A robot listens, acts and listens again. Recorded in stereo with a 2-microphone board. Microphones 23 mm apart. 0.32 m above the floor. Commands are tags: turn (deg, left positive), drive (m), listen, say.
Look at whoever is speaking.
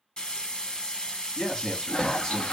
<turn deg="40"/>
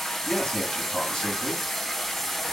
<turn deg="95"/>
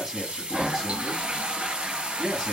<turn deg="-20"/>
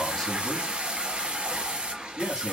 <turn deg="-10"/>
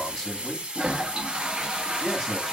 <say>Facing the man speaking.</say>